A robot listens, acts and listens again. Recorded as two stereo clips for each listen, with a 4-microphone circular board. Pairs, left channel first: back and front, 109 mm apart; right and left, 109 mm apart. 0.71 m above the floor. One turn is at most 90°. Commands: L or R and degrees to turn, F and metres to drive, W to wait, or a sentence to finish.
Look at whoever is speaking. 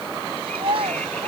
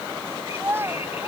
L20
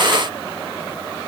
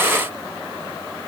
W
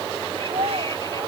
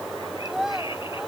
Facing the child speaking.